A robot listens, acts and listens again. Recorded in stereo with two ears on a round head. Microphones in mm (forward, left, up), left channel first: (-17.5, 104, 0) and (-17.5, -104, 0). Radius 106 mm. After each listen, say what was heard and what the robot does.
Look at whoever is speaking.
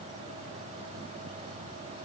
Keep listening.
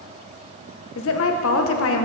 The woman speaking: about 60° left or 120° left. Turn 60° left.
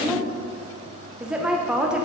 Facing the woman speaking, under 1 m away.